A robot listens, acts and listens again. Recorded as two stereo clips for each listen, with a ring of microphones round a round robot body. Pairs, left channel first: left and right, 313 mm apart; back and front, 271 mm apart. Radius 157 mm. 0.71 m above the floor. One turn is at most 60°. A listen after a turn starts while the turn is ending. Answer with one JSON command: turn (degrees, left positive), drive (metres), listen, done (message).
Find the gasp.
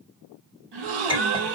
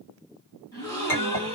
{"turn": -60}
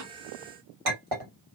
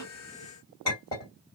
{"turn": -40}
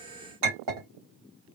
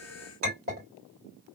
{"done": "Facing where the gasp came from. I can't hear it now."}